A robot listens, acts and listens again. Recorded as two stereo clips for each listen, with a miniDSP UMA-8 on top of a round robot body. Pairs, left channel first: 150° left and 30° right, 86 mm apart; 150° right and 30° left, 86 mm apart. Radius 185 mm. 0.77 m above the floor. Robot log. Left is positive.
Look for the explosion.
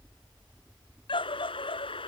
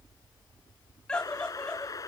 note: The explosion: 160° left.
cmd yaw +160
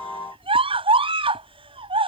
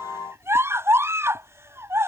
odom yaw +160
end: Facing where the explosion came from. I can't hear it now.